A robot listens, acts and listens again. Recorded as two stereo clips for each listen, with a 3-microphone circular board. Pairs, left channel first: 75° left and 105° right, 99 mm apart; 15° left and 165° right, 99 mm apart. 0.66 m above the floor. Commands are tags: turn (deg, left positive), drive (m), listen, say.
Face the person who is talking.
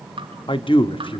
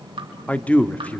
<turn deg="90"/>
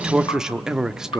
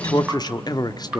<turn deg="-20"/>
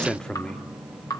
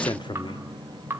<say>Facing the man speaking.</say>